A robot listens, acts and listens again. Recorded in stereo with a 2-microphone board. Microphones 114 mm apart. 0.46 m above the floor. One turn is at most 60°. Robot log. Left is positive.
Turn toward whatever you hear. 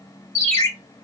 note: The ringtone: about 30° left or 150° left.
cmd yaw +30
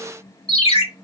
note: So it is at 120° left.
cmd yaw +60
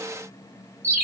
note: The ringtone is now 90° left.
cmd yaw +60
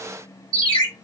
note: The ringtone is now 55° left.
cmd yaw +55
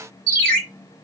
note: The ringtone is now 10° left.
cmd yaw +10
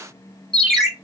end: Facing the ringtone.